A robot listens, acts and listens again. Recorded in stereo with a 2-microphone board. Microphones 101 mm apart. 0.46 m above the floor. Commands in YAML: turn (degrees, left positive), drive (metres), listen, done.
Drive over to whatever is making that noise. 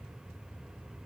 listen: true
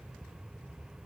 listen: true
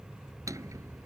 turn: -35
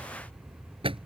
turn: -115
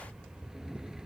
drive: 1.0
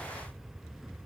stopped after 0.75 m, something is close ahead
listen: true
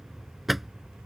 done: "Something is in my way. I am facing the drawer but have not reached it."